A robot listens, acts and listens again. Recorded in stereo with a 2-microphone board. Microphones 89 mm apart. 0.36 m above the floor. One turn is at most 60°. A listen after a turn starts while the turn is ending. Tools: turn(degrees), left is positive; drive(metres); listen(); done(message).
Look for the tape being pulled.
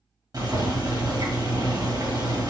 listen()
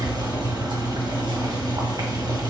listen()
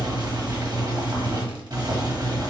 done("I can't make out tape being pulled to turn to.")